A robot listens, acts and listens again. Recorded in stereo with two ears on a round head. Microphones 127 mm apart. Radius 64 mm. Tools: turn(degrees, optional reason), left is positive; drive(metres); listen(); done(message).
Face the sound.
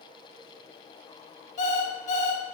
turn(degrees=55, reason="The alarm clock: about 55° left or 125° left.")
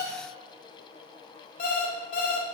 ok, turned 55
turn(degrees=70, reason="So it is at 70° left.")
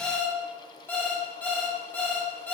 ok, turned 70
turn(degrees=15, reason="The alarm clock is now 15° left.")
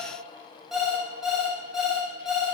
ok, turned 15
done("Found it: an alarm clock, straight ahead.")